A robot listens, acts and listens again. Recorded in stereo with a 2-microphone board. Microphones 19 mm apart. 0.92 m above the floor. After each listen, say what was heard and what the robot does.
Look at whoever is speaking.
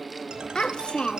The child speaking: about 55° left or 125° left. Turn 55° left.
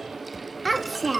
Facing the child speaking, under 1 m away.